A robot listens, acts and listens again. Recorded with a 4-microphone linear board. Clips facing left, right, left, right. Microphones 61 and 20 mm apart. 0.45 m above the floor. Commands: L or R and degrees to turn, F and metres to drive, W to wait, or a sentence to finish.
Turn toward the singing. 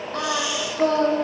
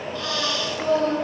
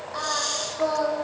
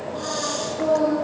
L60
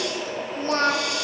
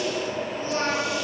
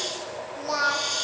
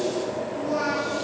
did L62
L55
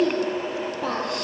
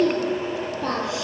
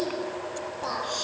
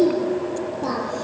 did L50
Found it: singing, straight ahead.